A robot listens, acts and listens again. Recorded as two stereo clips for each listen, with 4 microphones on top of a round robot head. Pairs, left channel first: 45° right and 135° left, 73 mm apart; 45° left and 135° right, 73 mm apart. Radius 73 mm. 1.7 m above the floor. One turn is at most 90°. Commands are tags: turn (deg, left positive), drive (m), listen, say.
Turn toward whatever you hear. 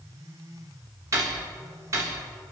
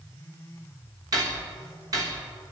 <turn deg="-90"/>
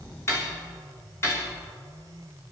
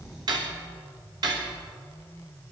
<turn deg="-90"/>
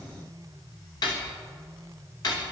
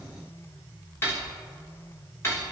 <turn deg="-10"/>
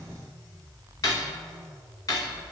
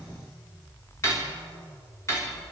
<say>Facing the cutlery clinking.</say>